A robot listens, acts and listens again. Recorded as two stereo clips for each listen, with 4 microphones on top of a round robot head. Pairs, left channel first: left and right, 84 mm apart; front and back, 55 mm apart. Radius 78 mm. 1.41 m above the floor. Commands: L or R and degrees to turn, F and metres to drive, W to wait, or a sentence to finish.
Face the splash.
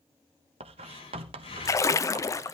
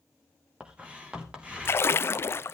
L40
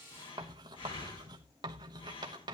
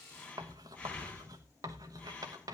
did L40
I heard a splash from this way, but can't make it out now.